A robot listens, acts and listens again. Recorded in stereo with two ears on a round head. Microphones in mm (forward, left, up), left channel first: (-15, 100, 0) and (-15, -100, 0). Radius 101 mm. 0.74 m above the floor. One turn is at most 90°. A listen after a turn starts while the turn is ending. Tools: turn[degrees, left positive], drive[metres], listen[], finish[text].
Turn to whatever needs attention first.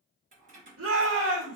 Thought: The shout: about 65° right or 115° right.
Action: turn[-65]
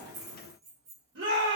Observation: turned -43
Thought: So it is at 55° right.
Action: turn[-55]
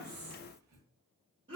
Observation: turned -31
Thought: The shout is now 25° right.
Action: turn[-25]
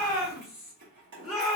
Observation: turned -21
Action: finish[Facing the shout, 1 to 2 m away.]